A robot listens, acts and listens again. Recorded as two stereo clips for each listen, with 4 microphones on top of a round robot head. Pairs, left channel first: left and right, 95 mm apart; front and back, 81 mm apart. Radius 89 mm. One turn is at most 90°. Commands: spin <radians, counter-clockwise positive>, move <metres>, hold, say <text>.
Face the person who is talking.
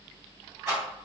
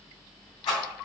hold
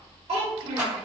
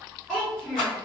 spin -1.48
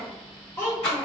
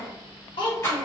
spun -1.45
spin 0.52
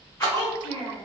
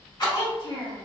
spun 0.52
spin 0.35
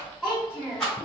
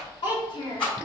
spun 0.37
spin 0.26
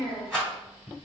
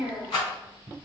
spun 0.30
say Found it: a child speaking, straight ahead, 1 to 2 m away.